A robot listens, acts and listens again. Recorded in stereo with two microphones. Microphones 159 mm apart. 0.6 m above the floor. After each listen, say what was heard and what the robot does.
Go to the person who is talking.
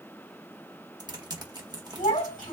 The child speaking: about 60° left or 120° left. Turn 60° left.
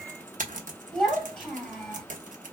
Drive 1.0 m forward.
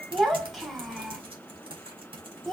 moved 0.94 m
Drive 1.0 m forward.
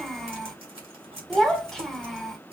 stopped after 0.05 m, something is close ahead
Arrived at the child speaking, straight ahead.